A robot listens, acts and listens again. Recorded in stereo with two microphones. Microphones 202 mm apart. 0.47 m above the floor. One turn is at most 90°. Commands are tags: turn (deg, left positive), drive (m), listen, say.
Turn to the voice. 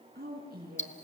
<turn deg="-50"/>
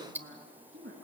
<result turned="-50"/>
<turn deg="-80"/>
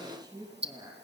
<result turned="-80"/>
<turn deg="-20"/>
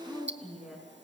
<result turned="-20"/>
<say>Found it: a woman speaking, straight ahead, over 4 m away.</say>